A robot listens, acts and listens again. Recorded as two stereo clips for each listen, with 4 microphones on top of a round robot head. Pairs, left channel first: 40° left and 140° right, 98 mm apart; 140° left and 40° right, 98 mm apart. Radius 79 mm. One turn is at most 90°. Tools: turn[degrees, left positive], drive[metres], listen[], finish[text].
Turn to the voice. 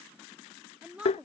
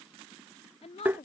Thought: The woman speaking: 145° left.
Action: turn[90]
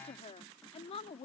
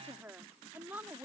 Thought: The woman speaking is now 30° left.
Action: turn[30]
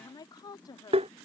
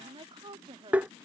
Action: finish[Found it: a woman speaking, straight ahead.]